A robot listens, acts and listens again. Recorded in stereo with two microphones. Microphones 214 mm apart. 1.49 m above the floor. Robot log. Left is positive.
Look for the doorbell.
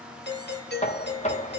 note: The doorbell: about 55° left or 125° left.
cmd yaw +55
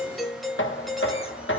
end: Facing the doorbell, 1 to 2 m away.